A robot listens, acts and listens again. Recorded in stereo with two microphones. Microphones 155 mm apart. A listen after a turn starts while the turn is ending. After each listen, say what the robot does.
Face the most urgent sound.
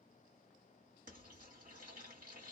Keep listening.
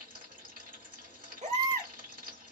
Turn 50° right.
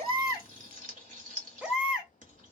Found it: a baby crying, straight ahead, under 1 m away.